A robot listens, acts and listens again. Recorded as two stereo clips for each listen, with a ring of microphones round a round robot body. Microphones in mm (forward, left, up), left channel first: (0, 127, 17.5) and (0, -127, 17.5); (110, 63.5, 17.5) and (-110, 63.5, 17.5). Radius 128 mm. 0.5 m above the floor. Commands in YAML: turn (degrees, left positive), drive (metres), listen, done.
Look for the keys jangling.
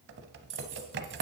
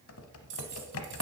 turn: -135
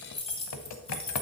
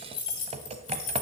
turn: 20
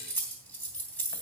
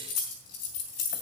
done: "Facing the keys jangling."